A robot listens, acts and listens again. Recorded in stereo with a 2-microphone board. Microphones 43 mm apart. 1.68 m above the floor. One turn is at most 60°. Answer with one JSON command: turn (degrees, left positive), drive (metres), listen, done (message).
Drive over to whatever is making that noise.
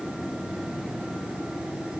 {"listen": true}
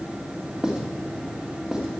{"turn": -20}
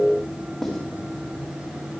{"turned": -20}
{"drive": 1.0}
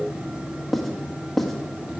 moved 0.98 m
{"drive": 1.0}
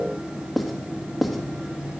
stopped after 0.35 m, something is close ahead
{"done": "Arrived at the writing, straight ahead."}